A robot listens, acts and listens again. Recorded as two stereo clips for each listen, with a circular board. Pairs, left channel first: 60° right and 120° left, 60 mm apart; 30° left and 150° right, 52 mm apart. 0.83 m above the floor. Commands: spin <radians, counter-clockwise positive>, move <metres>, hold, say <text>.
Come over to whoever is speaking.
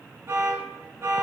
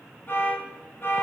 hold
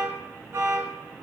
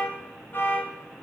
hold
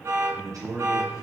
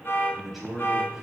spin 2.18
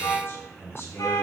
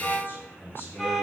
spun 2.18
spin -0.26
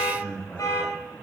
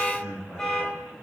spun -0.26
move 1.0
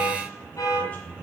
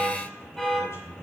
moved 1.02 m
move 1.0
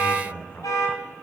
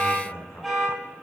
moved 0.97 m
move 1.0
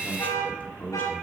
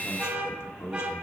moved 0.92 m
move 1.0
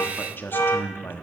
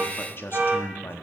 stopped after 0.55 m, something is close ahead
spin -0.17
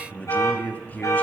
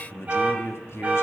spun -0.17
say I am next to the man speaking.